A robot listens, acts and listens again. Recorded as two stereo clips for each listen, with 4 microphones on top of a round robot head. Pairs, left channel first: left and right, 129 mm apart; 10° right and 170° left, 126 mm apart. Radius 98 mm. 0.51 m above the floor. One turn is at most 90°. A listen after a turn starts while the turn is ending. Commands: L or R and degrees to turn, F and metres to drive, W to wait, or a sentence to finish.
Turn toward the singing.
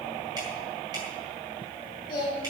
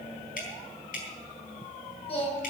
L30
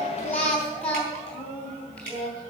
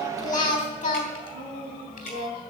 L10
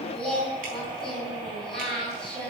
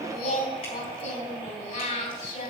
Found it: singing, straight ahead.